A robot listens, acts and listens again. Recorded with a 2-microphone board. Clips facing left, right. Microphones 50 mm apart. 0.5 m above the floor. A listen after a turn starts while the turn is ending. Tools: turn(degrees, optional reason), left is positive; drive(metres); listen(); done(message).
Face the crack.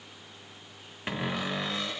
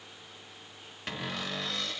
listen()
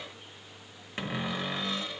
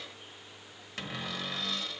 listen()
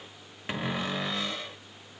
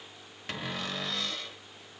done("I can't make out a crack, only a cupboard door.")